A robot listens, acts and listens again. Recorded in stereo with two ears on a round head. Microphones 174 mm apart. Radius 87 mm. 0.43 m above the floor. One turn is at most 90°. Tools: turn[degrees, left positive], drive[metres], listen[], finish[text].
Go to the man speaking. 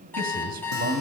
Thought: The man speaking: about 50° right or 130° right.
Action: turn[-50]
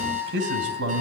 Thought: So it is at 75° right.
Action: turn[-75]
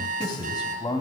Thought: The man speaking is now 25° left.
Action: turn[25]
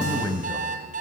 Thought: The man speaking is now 25° left.
Action: turn[25]
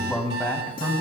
Thought: The man speaking is now 10° left.
Action: turn[10]
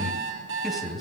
Action: drive[1.0]
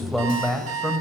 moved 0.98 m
Action: drive[1.0]
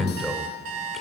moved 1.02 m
Action: drive[1.0]
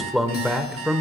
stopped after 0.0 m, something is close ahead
Action: finish[I am next to the man speaking.]